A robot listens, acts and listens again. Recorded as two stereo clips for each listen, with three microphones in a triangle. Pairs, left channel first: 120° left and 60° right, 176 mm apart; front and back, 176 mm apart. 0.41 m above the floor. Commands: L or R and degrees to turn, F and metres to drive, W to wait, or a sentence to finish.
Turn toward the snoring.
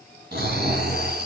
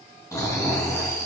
R70
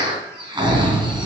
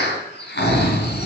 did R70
Found it: snoring, straight ahead, 2 to 4 m away.